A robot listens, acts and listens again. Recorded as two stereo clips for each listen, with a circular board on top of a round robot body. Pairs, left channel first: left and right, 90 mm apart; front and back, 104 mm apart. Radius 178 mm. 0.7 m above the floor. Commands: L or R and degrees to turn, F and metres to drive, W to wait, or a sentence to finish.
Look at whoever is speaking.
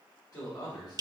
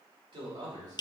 L135
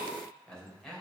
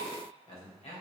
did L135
Facing the man speaking, 2 to 4 m away.